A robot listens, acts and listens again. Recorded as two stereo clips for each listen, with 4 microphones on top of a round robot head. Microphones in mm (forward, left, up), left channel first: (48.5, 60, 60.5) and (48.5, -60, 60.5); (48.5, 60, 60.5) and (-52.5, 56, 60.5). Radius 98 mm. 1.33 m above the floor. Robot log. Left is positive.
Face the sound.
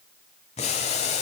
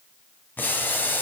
note: The boiling: 70° left.
cmd yaw +70
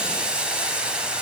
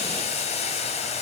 note: The boiling is now 10° right.
cmd yaw -10
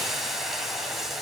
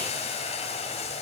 end: Facing the boiling.